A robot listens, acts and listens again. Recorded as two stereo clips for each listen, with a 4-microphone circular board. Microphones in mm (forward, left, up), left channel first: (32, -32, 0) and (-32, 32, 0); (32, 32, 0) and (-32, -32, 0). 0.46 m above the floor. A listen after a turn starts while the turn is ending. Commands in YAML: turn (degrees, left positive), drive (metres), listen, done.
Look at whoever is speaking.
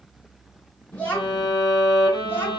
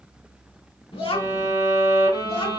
turn: 25
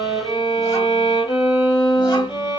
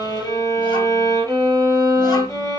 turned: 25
listen: true
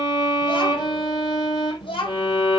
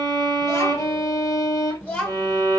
turn: -35
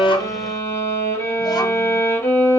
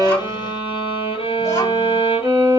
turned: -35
listen: true
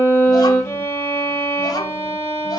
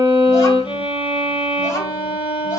listen: true
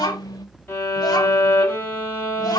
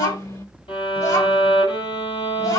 done: "Found it: a child speaking, straight ahead, 1 to 2 m away."